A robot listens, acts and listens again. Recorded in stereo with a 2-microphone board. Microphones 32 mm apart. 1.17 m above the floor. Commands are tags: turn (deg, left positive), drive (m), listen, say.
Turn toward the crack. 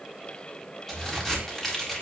<turn deg="30"/>
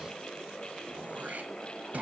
<listen/>
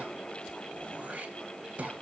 <say>I heard a crack, but can't make it out now. It was about 20° right or 140° left.</say>